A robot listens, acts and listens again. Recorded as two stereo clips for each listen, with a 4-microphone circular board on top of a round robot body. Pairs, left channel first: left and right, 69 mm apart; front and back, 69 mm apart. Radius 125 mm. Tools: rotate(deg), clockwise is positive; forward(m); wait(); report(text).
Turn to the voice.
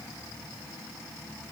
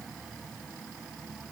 wait()
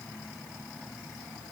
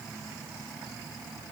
wait()
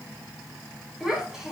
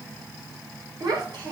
rotate(175)
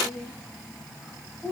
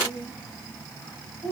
report("Found it: a child speaking, straight ahead.")